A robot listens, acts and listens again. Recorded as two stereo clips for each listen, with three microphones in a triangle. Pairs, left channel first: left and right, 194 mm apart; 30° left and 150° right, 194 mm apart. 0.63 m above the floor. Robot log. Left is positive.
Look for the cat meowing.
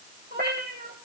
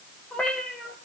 note: The cat meowing: 55° right.
cmd yaw -55
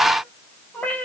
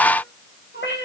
note: The cat meowing is now 10° left.
cmd yaw +10
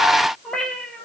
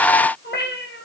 end: Facing the cat meowing, 2 to 4 m away.